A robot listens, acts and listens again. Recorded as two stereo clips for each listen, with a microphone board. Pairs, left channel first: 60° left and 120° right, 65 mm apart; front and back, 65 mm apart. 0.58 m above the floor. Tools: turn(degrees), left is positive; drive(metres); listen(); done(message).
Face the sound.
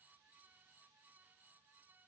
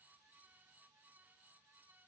listen()
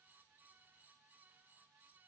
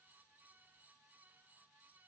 listen()
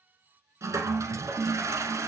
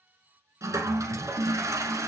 turn(degrees=-150)
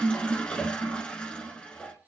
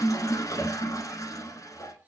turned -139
turn(degrees=-10)
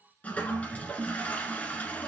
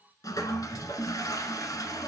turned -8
done("Found it: a toilet flushing, straight ahead.")